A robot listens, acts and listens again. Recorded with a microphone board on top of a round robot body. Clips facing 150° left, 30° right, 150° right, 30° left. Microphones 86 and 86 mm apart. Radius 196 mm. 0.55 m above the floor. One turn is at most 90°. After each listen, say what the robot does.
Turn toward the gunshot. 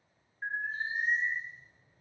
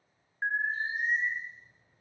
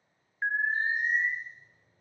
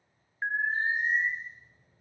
Keep listening.
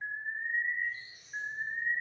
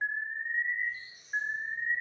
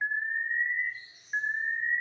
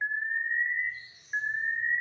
Keep listening.
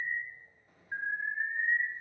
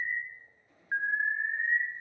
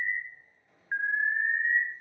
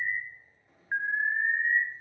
Turn 90° left.
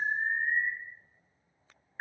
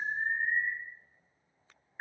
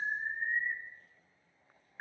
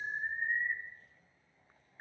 Turn 10° left.
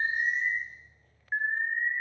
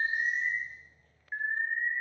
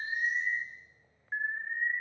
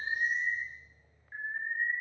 Facing where the gunshot came from. I can't hear it now.